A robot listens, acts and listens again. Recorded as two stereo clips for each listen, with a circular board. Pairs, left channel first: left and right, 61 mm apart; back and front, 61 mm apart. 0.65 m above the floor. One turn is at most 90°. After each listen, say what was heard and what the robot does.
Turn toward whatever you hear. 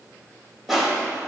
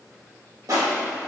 Found it: crushing, straight ahead.